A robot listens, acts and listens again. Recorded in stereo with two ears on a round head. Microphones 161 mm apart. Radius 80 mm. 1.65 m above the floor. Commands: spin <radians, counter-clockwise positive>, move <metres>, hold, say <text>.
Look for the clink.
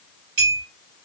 spin -0.96
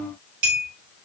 spin -0.96
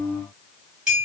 say Facing the clink, 1 to 2 m away.